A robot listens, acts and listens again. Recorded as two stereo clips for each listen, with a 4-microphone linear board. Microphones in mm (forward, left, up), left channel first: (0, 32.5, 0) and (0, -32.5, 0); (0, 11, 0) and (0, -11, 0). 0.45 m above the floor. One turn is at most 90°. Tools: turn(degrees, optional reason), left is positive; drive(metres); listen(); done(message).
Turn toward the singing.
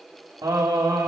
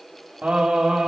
turn(degrees=-65, reason="The singing: about 65° right or 115° right.")
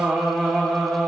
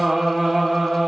done("Found it: singing, straight ahead.")